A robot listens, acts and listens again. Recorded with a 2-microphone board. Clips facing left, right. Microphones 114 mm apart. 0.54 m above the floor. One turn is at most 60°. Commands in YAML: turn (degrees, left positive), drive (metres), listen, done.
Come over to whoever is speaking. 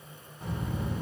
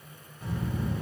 turn: 25
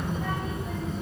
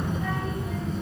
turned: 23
drive: 1.0
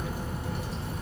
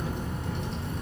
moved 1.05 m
drive: 1.0
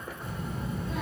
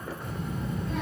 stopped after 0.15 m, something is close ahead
done: "Arrived at the child speaking, straight ahead."